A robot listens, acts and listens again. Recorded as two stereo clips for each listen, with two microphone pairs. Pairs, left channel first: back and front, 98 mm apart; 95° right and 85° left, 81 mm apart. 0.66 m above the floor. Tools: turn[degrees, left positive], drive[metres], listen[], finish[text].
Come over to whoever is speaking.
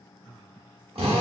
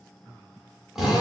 Action: listen[]
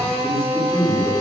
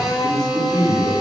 Thought: The man speaking: 45° left.
Action: turn[45]
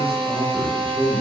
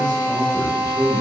Thought: The man speaking is now 15° left.
Action: turn[15]
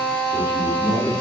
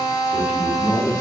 Action: drive[1.0]
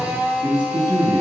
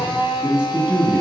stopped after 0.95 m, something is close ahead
Thought: The man speaking is now 10° left.
Action: turn[10]
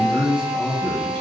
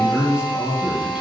Action: finish[Arrived at the man speaking, straight ahead.]